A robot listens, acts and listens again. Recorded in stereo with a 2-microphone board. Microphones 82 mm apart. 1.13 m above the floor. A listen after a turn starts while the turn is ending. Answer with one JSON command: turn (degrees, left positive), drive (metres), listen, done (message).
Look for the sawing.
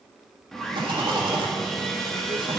{"turn": 30}
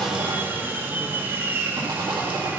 {"turn": -25}
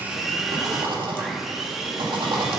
{"done": "Facing the sawing."}